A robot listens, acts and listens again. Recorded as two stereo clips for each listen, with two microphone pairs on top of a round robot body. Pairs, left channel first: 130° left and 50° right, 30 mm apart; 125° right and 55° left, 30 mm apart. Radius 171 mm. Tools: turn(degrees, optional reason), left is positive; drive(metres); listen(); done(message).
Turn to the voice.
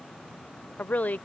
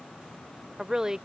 turn(degrees=125, reason="The woman speaking: 125° left.")
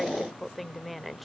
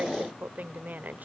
turn(degrees=45, reason="The woman speaking is now 45° left.")
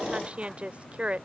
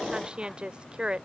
done("Found it: a woman speaking, straight ahead.")